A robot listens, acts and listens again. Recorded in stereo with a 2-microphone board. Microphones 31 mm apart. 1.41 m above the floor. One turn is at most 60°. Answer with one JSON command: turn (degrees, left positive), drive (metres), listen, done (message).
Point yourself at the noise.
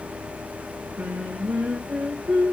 {"turn": -60}
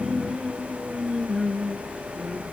{"done": "Found it: singing, straight ahead, 2 to 4 m away."}